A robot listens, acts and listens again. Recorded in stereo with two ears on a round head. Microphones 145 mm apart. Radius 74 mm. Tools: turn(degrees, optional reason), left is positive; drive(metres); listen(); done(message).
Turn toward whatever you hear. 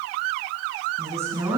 turn(degrees=-15, reason="The woman speaking: about 15° right or 165° right.")
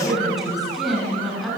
done("Found it: a woman speaking, straight ahead, over 4 m away.")